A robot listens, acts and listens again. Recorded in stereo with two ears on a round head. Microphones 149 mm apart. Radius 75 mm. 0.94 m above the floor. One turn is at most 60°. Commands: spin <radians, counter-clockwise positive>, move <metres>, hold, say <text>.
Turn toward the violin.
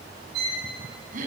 spin -1.05
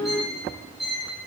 say Found it: a violin, straight ahead, over 4 m away.